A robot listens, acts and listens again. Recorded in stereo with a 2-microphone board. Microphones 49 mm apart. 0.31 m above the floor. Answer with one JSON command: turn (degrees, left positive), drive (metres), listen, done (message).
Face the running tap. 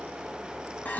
{"listen": true}
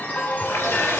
{"turn": 90}
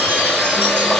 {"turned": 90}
{"done": "Found it: a running tap, straight ahead."}